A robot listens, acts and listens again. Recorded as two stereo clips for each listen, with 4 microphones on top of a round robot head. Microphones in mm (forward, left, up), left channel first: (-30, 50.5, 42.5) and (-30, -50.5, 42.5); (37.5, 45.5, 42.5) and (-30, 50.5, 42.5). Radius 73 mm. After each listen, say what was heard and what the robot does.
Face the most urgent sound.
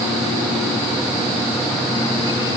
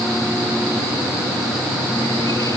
Keep listening.
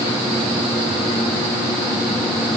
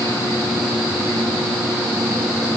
Keep listening.
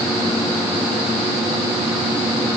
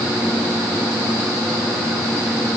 I can't make out anything urgent.